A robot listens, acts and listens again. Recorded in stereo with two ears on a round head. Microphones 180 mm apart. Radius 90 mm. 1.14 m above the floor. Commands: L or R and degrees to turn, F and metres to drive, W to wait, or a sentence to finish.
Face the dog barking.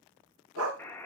R90
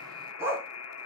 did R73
R10
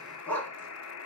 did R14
L10
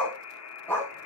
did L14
L10
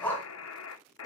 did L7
L20
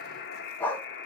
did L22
L10
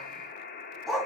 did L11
Found it: a dog barking, straight ahead.